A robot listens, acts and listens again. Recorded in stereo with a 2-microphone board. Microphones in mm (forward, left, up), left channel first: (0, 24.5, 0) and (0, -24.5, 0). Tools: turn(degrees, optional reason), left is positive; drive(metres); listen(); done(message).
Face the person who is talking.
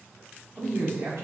turn(degrees=-60, reason="The man speaking: about 60° right or 120° right.")
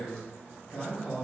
done("Facing the man speaking.")